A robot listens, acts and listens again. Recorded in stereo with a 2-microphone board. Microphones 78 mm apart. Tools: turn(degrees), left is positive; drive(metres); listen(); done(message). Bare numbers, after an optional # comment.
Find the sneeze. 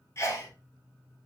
# The sneeze: about 35° left or 145° left.
turn(35)
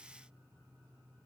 listen()
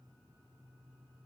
done("I heard a sneeze, but can't make it out now. It was about straight ahead or 110° left.")